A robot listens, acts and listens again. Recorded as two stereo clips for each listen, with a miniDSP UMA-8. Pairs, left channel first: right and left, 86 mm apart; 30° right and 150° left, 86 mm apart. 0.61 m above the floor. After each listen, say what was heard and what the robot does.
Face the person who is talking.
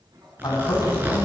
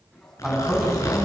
The man speaking: 125° right. Turn 125° right.
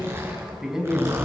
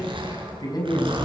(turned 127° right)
Found it: a man speaking, straight ahead.